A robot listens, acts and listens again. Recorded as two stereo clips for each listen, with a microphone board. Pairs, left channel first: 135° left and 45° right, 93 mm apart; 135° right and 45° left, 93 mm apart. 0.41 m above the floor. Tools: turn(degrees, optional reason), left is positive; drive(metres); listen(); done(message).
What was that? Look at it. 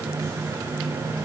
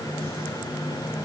listen()
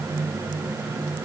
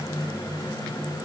listen()
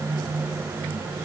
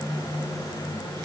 done("I can't make out anything.")